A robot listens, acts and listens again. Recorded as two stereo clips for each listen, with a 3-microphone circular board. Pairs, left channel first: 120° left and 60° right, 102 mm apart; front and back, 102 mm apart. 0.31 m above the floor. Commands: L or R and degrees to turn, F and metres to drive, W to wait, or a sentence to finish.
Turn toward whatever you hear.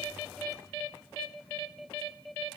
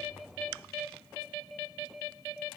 W
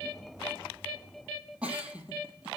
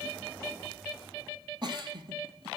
R140
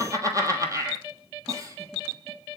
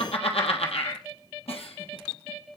Found it: a giggle, straight ahead.